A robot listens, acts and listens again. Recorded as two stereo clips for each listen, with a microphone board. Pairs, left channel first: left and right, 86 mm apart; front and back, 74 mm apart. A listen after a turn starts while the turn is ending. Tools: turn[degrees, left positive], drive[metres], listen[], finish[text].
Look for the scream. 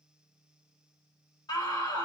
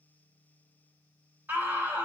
Thought: The scream: 115° left.
Action: turn[115]
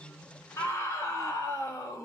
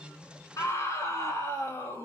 Thought: The scream is now 35° left.
Action: turn[35]
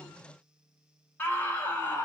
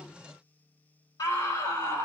Thought: The scream is now 25° left.
Action: turn[25]
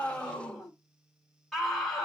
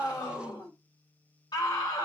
Action: finish[Facing the scream.]